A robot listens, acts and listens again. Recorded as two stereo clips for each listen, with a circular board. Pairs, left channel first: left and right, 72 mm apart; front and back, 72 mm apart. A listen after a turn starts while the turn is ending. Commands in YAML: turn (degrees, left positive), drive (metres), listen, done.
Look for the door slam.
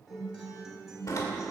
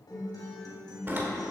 turn: 125
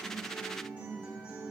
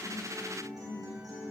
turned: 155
turn: -30
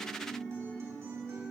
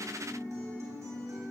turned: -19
turn: -15
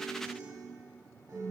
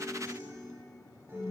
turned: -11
done: "I heard a door slam from this way, but can't make it out now."